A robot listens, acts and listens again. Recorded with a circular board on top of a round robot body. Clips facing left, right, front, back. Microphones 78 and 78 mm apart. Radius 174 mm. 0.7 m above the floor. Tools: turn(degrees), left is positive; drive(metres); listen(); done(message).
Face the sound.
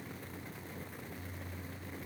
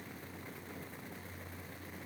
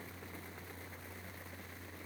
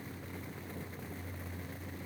listen()
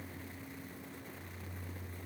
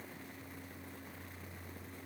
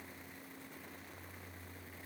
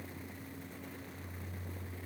listen()
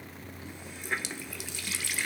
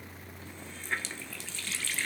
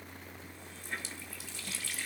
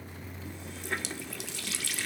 turn(degrees=165)
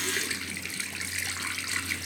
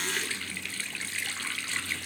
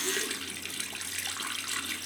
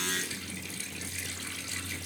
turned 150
turn(degrees=15)
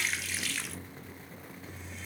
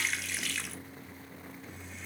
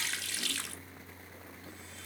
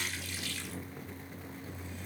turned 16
done("Found it: a running tap, straight ahead.")